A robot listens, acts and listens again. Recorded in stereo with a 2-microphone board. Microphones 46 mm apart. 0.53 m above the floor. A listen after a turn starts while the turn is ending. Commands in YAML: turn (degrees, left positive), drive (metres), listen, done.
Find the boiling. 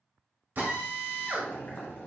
turn: 60
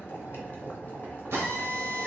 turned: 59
turn: 50
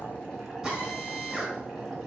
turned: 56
done: "Found it: boiling, straight ahead, 1 to 2 m away."